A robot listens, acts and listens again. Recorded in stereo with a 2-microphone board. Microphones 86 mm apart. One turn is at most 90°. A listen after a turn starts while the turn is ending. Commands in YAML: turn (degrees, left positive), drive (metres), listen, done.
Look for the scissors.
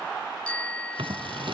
turn: -70
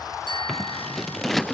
done: "Found it: scissors, straight ahead."